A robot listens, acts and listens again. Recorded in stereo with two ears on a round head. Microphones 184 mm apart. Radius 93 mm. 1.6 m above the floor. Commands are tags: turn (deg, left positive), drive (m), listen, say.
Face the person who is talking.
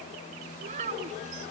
<turn deg="-35"/>
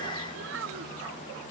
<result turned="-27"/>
<turn deg="-115"/>
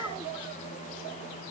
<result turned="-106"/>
<turn deg="-10"/>
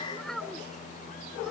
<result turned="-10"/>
<say>Facing the child speaking.</say>